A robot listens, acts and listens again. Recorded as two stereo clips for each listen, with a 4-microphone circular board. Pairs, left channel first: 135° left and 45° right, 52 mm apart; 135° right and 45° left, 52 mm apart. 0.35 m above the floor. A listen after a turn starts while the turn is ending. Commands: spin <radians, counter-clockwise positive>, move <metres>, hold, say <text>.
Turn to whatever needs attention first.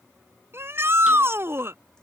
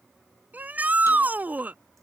spin -0.26
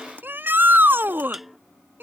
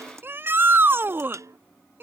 say Found it: a shout, straight ahead.